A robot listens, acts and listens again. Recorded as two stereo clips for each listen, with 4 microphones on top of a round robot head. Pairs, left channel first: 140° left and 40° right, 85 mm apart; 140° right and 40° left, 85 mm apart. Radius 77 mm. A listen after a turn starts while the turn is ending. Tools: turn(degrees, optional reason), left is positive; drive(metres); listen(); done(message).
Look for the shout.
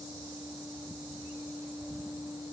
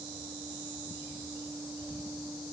listen()
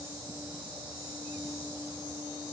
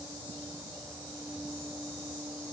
listen()
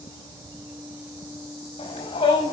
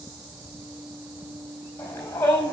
turn(degrees=155, reason="The shout: 155° left.")
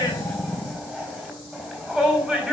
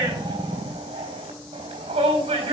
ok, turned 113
turn(degrees=45, reason="The shout is now 45° left.")
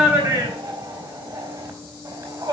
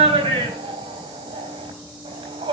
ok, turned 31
turn(degrees=15, reason="The shout is now 15° left.")
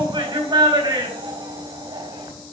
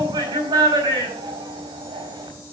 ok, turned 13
done("Facing the shout.")